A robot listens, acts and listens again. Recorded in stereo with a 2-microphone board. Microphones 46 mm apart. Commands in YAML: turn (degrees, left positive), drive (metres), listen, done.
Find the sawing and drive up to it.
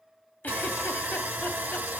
turn: -35
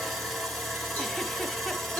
drive: 1.0
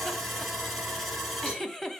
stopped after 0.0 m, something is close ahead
done: "Something is in my way. I am facing the sawing but have not reached it."